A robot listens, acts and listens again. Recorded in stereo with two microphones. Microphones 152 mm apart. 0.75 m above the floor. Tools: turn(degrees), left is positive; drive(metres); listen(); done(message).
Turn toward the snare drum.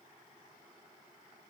listen()
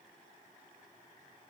listen()
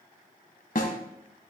turn(degrees=70)
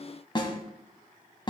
turn(degrees=35)
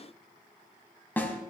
turn(degrees=15)
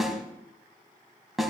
done("Found it: a snare drum, straight ahead.")